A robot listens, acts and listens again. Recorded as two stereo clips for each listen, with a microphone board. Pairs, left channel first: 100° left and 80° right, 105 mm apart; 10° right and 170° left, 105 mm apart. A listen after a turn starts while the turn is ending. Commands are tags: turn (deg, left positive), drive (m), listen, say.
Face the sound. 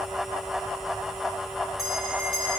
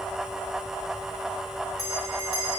<turn deg="-160"/>
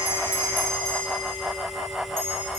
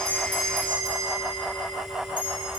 <turn deg="-55"/>
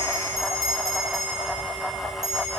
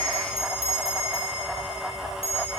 <turn deg="-25"/>
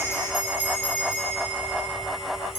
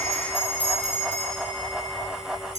<say>Found it: a bell, straight ahead, over 4 m away.</say>